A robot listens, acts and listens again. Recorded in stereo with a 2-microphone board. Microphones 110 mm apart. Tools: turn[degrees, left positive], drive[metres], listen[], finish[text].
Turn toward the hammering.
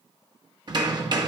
Thought: The hammering: about 40° right or 140° right.
Action: turn[-40]
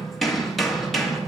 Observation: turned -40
Action: finish[Facing the hammering.]